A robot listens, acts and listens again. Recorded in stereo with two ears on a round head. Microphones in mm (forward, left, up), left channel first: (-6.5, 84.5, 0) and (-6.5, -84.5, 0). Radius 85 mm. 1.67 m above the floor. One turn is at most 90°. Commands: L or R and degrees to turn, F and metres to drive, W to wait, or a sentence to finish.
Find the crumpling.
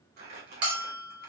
R55
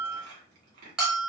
R50
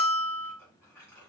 L20
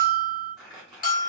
Facing the crumpling, 1 to 2 m away.